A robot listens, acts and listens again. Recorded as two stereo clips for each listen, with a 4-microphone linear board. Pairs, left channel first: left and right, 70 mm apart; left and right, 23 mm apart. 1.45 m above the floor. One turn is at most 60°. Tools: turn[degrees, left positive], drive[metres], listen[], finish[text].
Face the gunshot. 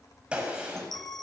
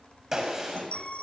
Thought: The gunshot: about 15° right or 165° right.
Action: turn[-15]
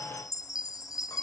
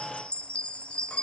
Action: listen[]
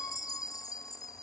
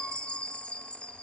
Action: finish[I heard a gunshot, but can't make it out now. It was about straight ahead or 150° right.]